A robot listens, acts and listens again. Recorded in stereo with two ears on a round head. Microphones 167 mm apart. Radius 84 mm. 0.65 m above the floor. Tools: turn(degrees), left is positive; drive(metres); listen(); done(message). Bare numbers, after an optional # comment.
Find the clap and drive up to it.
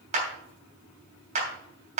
# The clap: about 40° right or 140° right.
turn(-40)
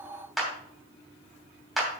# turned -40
drive(1.0)
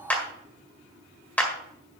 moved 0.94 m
# The clap is now 10° left.
turn(10)
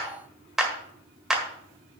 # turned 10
drive(1.0)
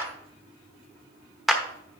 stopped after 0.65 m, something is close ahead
done("Arrived at the clap, straight ahead.")